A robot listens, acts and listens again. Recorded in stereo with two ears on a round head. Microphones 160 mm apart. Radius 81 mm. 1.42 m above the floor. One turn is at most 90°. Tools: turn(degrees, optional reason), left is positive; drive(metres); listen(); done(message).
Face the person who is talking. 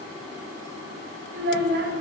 turn(degrees=-55, reason="The child speaking: about 55° right or 125° right.")
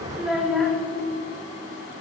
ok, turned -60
done("Found it: a child speaking, straight ahead, 1 to 2 m away.")